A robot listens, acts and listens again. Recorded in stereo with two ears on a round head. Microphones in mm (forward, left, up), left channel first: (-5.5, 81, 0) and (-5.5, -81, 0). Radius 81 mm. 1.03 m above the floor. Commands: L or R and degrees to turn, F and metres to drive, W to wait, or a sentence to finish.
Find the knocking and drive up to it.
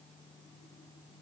W
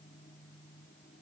W
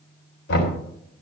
L65
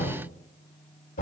L45
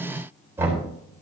R15
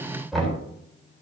F1.0
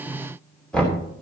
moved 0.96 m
F1.0
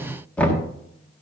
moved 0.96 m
F1.0
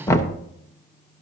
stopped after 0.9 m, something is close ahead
L15
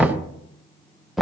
I am next to the knocking.